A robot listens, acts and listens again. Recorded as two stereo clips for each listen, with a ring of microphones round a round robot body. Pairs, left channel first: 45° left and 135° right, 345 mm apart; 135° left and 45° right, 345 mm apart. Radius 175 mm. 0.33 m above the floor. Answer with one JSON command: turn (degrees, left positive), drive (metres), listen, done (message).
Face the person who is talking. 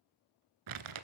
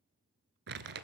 {"listen": true}
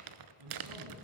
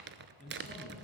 {"turn": -160}
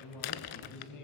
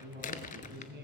{"turn": 15}
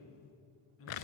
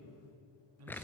{"done": "Facing the man speaking, over 4 m away."}